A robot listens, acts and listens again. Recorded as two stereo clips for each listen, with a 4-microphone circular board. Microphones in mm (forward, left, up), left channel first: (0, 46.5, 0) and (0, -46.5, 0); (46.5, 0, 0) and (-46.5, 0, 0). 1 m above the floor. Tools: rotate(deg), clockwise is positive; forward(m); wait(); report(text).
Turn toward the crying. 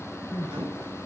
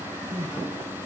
rotate(-170)
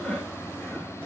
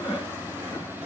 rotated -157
rotate(-10)
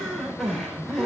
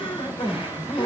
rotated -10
report("Facing the crying.")